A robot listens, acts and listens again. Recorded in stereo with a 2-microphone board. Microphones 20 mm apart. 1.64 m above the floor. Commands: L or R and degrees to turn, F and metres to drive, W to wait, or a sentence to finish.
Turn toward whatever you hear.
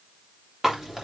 R15
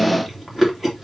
Found it: chewing, straight ahead, 2 to 4 m away.